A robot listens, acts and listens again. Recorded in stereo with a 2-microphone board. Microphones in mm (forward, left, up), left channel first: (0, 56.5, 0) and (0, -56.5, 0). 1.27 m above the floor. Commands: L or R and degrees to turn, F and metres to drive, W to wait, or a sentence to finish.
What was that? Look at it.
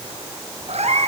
R90
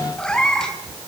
Found it: a cat meowing, straight ahead, 2 to 4 m away.